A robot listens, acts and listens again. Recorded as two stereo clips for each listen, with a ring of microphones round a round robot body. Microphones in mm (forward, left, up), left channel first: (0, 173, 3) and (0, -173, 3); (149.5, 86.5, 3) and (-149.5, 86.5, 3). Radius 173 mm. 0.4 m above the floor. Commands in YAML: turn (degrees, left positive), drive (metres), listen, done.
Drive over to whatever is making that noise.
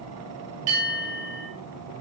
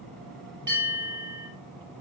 turn: -115
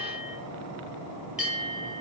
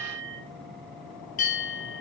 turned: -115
drive: 1.0
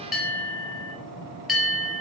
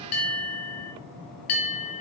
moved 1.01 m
drive: 1.0
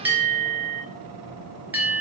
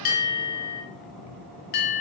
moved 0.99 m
drive: 1.0
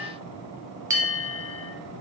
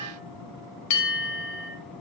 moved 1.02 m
turn: -10
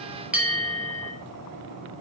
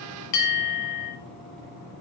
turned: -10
drive: 1.0
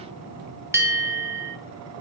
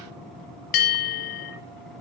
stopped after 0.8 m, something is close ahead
turn: -10
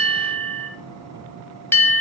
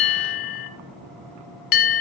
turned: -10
done: "Arrived at the bell, straight ahead."